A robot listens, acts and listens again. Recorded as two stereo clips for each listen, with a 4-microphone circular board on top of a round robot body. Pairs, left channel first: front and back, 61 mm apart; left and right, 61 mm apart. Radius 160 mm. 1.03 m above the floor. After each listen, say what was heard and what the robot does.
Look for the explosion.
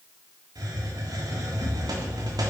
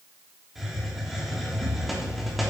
The explosion: 25° right. Turn 25° right.
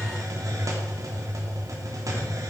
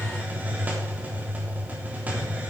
I heard an explosion from this way, but can't make it out now.